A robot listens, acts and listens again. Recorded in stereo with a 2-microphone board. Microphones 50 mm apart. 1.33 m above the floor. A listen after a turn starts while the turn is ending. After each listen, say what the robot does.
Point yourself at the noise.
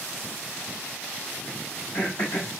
Turn 60° left.
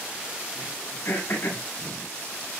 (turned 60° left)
Turn 65° left.
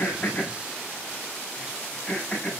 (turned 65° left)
Found it: throat clearing, straight ahead, over 4 m away.